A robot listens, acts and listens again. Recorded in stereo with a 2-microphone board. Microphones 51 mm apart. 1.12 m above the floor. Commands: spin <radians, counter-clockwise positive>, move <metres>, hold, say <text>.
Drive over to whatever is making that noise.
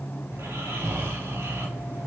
spin -1.57
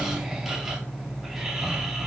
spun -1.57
move 1.0
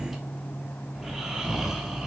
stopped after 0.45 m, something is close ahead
say Blocked. The snoring is further on, straight ahead.